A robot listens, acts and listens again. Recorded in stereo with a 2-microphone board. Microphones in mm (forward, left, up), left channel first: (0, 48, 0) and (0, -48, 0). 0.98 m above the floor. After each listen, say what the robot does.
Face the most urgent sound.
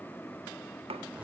Keep listening.
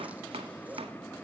Keep listening.
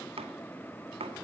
I can't make out anything urgent, only chopping.